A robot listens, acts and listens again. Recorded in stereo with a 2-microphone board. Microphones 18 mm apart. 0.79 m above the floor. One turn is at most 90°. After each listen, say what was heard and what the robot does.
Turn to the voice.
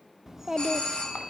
The child speaking: about 25° right or 155° right. Turn 25° right.
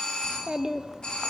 So it is at 130° right. Turn 90° right.
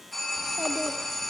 Nothing new. It was at 40° right. Turn 40° right.
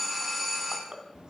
The child speaking is now 50° right. Turn 50° right.
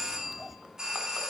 The child speaking is now 15° right. Turn 15° right.
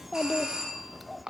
Found it: a child speaking, straight ahead.